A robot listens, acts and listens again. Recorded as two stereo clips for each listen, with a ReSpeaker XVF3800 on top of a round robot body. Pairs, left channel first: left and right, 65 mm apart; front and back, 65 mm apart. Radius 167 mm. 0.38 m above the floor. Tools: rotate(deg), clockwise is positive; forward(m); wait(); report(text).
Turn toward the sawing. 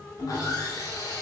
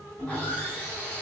rotate(-65)
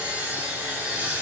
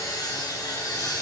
rotate(20)
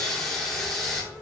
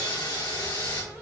report("Facing the sawing.")